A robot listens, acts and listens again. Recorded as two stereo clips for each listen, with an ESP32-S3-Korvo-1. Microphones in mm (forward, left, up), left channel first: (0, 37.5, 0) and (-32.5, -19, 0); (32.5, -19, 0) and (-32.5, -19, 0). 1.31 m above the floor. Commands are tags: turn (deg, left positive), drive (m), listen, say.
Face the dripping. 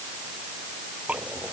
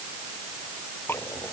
<turn deg="-50"/>
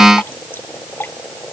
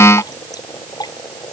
<say>Facing the dripping.</say>